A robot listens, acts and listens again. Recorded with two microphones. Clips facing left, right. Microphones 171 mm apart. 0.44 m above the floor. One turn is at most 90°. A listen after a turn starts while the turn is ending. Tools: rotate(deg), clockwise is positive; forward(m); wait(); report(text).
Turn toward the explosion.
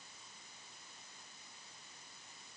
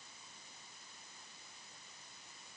wait()
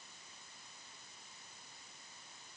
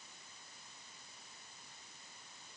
wait()
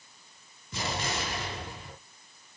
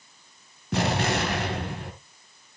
rotate(75)
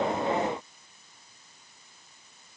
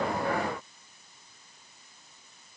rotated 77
wait()
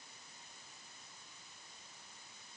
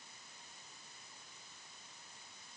report("I heard an explosion, but can't make it out now. It was about 5° left or 30° right.")